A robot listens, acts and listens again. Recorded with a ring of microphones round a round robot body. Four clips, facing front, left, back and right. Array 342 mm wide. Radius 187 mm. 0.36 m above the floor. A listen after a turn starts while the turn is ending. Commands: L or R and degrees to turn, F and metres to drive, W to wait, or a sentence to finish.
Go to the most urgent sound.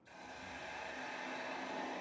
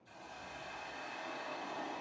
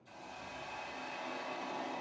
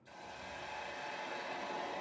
W
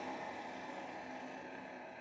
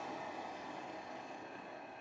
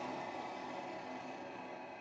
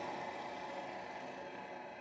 W
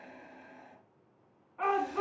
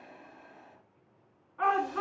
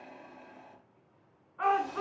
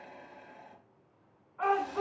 L35
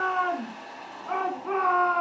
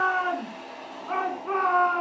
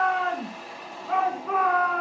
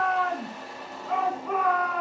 F1.0
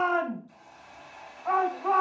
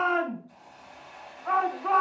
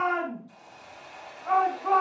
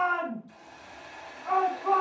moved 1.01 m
L15
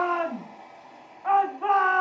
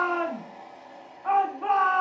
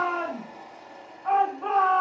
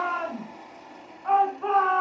F1.0
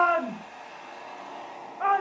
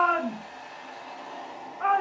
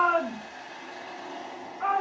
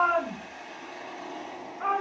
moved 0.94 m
F1.0
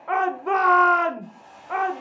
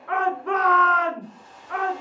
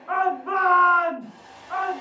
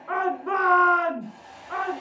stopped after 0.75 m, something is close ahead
I am next to the shout.